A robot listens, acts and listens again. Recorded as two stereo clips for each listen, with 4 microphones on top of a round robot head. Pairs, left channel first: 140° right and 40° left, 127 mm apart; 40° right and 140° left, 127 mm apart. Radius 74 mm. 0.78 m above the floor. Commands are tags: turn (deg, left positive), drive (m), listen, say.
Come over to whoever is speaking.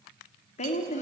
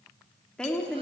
<turn deg="-120"/>
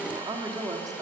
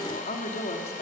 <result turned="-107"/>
<turn deg="-15"/>
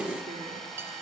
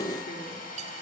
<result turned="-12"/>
<listen/>
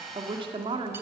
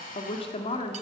<drive m="1.0"/>
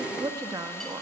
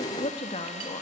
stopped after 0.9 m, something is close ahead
<turn deg="-15"/>
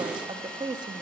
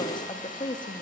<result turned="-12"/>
<say>Arrived at the woman speaking, straight ahead.</say>